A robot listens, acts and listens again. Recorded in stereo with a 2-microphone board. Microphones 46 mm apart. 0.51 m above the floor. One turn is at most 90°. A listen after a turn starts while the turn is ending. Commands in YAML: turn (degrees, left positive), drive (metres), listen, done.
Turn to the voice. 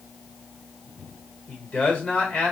turn: 30
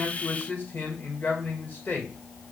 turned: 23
turn: 90
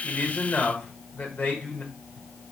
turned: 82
turn: 40
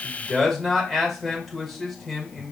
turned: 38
done: "Facing the man speaking, 1 to 2 m away."